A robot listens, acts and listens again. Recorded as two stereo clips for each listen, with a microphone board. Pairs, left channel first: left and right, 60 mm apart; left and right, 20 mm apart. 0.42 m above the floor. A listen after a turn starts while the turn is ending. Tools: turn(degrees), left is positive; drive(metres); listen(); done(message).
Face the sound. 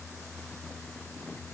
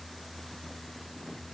listen()
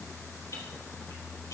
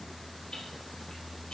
turn(degrees=90)
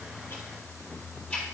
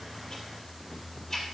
turn(degrees=15)
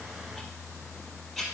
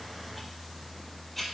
done("Found it: ticking, straight ahead.")